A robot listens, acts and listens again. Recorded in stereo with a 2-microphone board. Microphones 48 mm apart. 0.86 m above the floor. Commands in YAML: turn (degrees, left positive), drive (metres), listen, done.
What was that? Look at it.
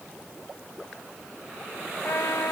turn: 90
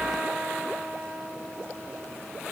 turn: -10
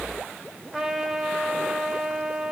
done: "Facing the trumpet."